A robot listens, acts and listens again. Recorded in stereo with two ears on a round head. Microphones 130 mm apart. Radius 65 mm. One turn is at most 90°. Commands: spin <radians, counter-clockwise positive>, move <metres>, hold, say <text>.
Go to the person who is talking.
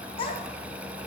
spin 0.70
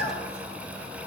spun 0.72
spin 1.57
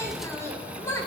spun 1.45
spin 0.35
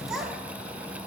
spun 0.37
move 1.0
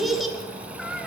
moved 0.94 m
move 1.0
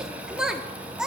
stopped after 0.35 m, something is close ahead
say Arrived at the child speaking, straight ahead.